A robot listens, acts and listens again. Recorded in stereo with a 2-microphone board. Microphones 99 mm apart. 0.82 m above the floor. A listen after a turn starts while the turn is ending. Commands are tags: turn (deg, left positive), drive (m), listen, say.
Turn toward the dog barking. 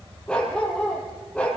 <turn deg="30"/>
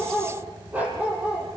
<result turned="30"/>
<turn deg="-15"/>
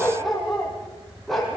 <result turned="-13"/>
<say>Facing the dog barking, over 4 m away.</say>